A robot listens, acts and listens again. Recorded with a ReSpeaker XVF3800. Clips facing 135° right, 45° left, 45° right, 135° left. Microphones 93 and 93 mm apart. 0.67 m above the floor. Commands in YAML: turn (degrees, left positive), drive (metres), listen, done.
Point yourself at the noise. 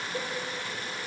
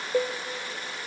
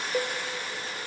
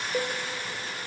turn: 40
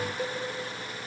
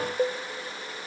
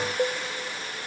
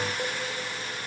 turn: 10
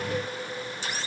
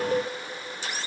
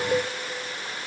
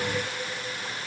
listen: true
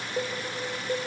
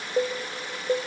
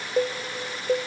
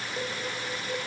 done: "Facing the cowbell, under 1 m away."